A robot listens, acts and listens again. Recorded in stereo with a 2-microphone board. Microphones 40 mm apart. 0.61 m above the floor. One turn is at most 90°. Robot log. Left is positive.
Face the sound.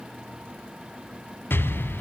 note: The explosion: about 65° left or 115° left.
cmd yaw +65
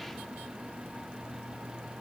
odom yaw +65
cmd idle
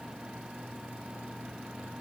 end: I heard an explosion, but can't make it out now. It was about straight ahead or 50° left.